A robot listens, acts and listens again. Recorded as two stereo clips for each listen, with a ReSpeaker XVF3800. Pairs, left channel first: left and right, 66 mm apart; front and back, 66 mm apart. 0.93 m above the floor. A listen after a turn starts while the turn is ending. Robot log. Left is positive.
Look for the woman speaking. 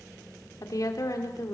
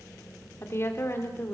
note: The woman speaking: 55° left.
cmd yaw +55
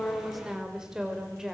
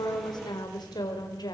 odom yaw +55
note: The woman speaking is now 10° right.
cmd yaw -10
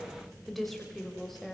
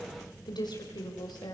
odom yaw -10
end: Found it: a woman speaking, straight ahead.